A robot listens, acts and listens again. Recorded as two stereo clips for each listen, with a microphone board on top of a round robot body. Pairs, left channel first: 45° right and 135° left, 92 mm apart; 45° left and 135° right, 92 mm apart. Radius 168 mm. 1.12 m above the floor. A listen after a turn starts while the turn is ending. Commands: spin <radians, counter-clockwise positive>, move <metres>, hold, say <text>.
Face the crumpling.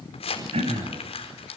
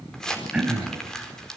spin -0.70
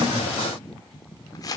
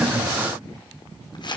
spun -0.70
say Found it: crumpling, straight ahead, over 4 m away.